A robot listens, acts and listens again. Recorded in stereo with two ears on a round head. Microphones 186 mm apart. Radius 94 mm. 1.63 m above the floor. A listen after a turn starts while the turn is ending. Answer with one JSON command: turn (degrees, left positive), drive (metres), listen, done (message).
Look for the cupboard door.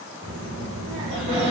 {"turn": -35}
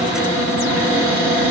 {"turn": -110}
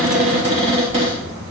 {"turn": -30}
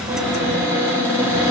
{"turn": 10}
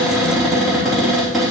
{"done": "Facing the cupboard door, 2 to 4 m away."}